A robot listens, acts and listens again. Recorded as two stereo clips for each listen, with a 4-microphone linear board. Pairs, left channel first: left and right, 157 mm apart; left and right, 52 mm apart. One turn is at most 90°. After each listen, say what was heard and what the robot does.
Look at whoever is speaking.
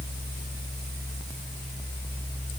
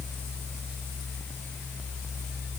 Keep listening.
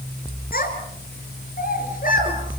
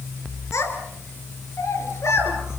The child speaking: about 55° left or 125° left. Turn 55° left.
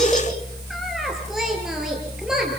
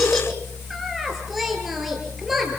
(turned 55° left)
Found it: a child speaking, straight ahead.